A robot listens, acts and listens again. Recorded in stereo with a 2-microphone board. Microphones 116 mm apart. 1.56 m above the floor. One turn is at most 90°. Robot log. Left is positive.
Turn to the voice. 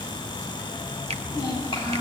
note: The child speaking: about 45° left or 135° left.
cmd yaw +45
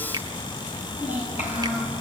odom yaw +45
note: So it is at 90° left.
cmd yaw +90
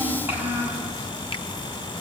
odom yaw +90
note: The child speaking is now 15° right.
cmd yaw -15
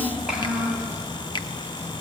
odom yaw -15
end: Facing the child speaking, over 4 m away.